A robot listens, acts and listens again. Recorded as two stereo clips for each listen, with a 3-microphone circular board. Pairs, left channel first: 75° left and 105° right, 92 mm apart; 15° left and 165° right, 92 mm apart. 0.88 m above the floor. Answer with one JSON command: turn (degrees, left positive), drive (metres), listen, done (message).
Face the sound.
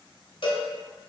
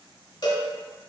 {"turn": 55}
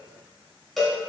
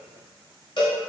{"turn": -15}
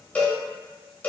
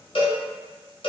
{"done": "Found it: a cowbell, straight ahead, 1 to 2 m away."}